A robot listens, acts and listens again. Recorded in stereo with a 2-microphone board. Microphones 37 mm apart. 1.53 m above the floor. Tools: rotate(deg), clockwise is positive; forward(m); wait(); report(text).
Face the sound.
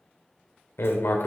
rotate(-90)
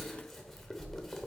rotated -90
report("Facing the writing.")